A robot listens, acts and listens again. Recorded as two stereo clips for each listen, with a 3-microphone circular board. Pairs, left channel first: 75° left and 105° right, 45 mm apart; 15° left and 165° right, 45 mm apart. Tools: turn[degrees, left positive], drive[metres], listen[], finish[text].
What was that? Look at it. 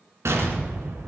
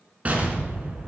Thought: The explosion: 110° right.
Action: turn[-110]
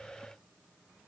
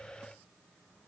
Action: finish[I heard an explosion from this way, but can't make it out now.]